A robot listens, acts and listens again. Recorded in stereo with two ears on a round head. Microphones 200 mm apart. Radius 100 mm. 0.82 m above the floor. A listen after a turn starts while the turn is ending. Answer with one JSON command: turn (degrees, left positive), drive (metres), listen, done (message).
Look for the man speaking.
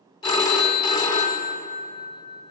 {"listen": true}
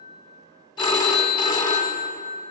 {"listen": true}
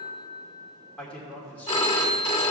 {"turn": 30}
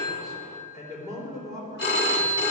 {"turn": -15}
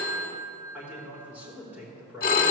{"turn": -10}
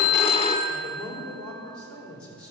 {"done": "Facing the man speaking, 2 to 4 m away."}